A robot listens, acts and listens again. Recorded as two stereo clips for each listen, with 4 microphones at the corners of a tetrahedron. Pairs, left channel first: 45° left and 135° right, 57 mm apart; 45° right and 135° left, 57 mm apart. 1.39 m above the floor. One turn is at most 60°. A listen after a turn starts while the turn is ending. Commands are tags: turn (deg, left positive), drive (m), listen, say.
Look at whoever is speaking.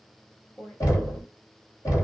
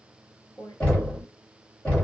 <turn deg="-15"/>
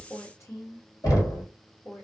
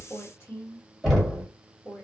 <say>Found it: a woman speaking, straight ahead.</say>